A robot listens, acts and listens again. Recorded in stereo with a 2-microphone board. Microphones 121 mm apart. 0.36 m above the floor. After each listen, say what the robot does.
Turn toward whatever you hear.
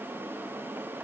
Keep listening.
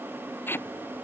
Turn 20° left.
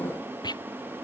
Turn 145° left.
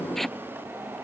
Found it: tape being pulled, straight ahead.